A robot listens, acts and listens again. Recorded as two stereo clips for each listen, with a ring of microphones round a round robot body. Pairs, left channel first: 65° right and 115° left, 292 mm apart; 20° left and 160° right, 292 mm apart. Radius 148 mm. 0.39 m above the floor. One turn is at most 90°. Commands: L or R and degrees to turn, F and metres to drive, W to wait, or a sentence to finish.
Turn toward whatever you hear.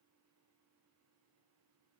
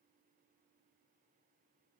W
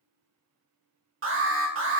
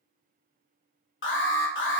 L70
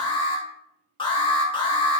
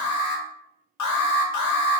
Facing the alarm, under 1 m away.